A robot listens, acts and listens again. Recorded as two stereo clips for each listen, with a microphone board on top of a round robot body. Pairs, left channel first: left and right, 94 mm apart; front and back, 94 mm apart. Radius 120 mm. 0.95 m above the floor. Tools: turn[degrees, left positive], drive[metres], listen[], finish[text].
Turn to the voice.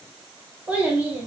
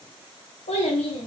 Thought: The child speaking: 15° right.
Action: turn[-15]
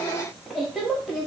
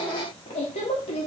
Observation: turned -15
Action: finish[Found it: a child speaking, straight ahead.]